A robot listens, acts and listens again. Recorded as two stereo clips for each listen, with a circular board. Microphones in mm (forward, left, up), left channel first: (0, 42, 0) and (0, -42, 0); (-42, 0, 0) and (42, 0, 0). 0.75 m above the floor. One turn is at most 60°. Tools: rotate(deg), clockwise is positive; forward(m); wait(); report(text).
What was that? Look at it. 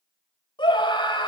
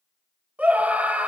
rotate(-60)
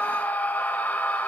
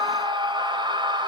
rotate(-15)
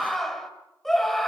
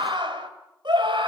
report("Facing the scream, 2 to 4 m away.")